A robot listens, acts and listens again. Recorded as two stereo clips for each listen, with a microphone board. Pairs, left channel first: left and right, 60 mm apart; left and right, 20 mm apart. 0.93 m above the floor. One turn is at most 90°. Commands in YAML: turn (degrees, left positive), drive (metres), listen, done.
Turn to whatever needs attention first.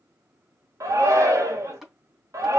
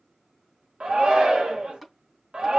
turn: -55
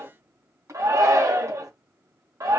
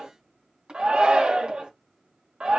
turn: -65
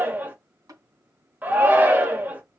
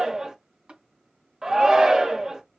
turn: -30
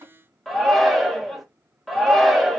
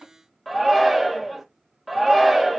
done: "Facing the shout."